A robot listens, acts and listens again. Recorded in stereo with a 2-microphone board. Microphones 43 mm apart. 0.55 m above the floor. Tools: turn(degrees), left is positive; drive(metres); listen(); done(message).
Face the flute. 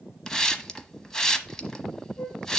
turn(degrees=45)
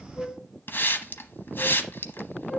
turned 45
done("Facing the flute.")